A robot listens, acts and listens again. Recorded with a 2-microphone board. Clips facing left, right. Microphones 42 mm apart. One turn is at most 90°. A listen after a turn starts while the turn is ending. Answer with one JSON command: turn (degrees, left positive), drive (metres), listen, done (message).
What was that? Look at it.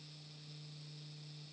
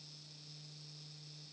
{"listen": true}
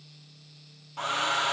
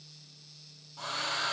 {"turn": 50}
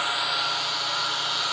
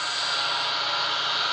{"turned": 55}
{"done": "Facing the hair dryer."}